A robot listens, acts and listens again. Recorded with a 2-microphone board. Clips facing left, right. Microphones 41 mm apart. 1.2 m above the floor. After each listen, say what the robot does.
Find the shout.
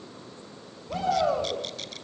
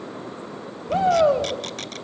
Turn 30° right.
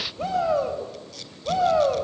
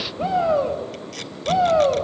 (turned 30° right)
Found it: a shout, straight ahead.